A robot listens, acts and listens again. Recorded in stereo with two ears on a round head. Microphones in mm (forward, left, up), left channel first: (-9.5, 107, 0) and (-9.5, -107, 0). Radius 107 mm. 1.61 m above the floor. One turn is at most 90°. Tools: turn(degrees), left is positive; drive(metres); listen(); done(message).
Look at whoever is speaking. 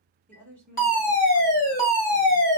turn(degrees=30)
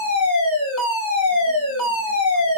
listen()
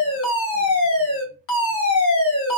listen()
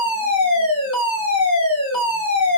done("I heard a woman speaking, but can't make it out now. It was about 25° right or 145° left.")